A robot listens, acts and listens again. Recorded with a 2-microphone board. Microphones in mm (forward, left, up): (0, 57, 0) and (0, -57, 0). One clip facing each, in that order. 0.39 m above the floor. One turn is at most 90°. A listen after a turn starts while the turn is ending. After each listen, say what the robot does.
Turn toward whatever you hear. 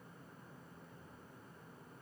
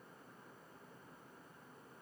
Keep listening.
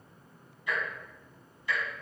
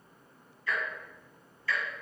Turn 20° left.
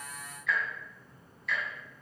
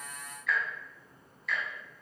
Found it: ticking, straight ahead.